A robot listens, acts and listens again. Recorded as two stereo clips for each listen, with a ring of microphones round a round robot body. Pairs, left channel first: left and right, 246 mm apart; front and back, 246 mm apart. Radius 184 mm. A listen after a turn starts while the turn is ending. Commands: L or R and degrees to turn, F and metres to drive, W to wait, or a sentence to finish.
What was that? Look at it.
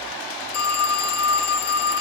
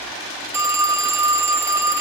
L100
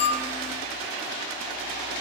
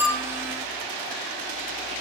W
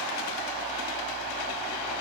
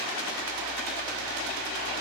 W
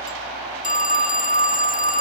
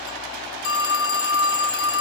L30
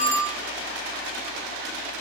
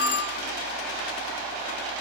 L10
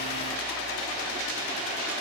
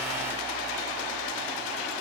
W
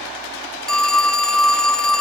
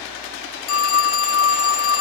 Facing the phone ringing, under 1 m away.